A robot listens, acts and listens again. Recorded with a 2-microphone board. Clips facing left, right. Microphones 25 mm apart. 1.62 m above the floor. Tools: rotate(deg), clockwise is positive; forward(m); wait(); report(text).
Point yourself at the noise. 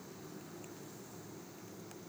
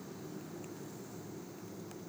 wait()
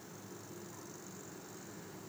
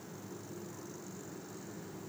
wait()
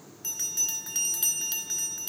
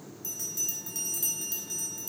rotate(-50)
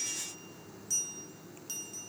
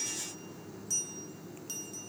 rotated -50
report("Found it: a bell, straight ahead, under 1 m away.")